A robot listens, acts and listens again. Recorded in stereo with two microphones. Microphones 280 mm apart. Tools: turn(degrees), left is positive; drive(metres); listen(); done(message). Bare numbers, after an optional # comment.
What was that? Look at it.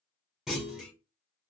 turn(30)
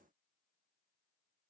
listen()
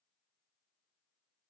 done("I heard a clunk, but can't make it out now. It was about 30° right or 150° left.")